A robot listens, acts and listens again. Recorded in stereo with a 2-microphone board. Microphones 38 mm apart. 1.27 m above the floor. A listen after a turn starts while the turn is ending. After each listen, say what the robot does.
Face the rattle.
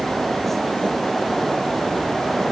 Keep listening.
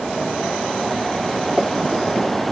Keep listening.
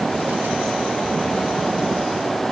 I can't make out a rattle to turn to.